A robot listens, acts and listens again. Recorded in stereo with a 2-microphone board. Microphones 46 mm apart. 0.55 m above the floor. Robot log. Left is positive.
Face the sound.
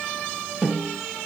cmd yaw -30
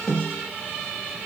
note: So it is at 20° left.
cmd yaw +20
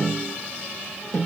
end: Found it: a snare drum, straight ahead.